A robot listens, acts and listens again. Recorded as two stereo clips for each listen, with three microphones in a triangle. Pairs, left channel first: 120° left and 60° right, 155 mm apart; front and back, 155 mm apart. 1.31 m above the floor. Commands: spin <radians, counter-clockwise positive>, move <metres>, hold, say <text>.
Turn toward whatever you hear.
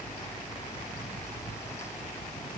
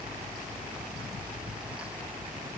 hold
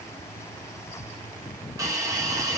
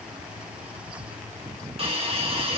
spin -2.27
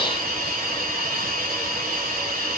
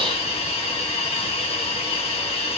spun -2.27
spin -0.79
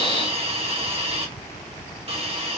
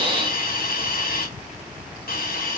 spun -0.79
spin -0.17
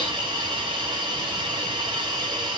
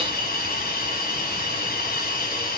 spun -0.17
say Found it: a hiss, straight ahead, 1 to 2 m away.